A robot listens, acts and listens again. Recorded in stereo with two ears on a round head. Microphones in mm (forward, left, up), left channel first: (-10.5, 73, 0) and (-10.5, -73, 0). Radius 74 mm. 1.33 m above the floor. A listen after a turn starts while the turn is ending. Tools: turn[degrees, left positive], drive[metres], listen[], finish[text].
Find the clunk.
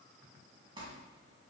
Action: listen[]
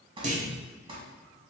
Thought: The clunk: about 50° right or 130° right.
Action: turn[-50]
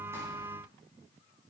Action: listen[]
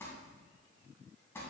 Action: finish[I heard a clunk, but can't make it out now. It was about straight ahead or 80° right.]